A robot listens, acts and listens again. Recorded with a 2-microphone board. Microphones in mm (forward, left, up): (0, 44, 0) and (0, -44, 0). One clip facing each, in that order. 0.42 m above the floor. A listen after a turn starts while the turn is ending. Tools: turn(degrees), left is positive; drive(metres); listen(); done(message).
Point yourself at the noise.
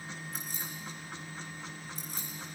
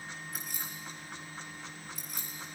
turn(degrees=35)
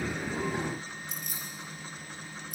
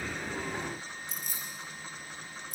turn(degrees=110)
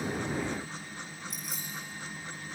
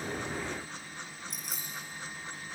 done("Found it: keys jangling, straight ahead, over 4 m away.")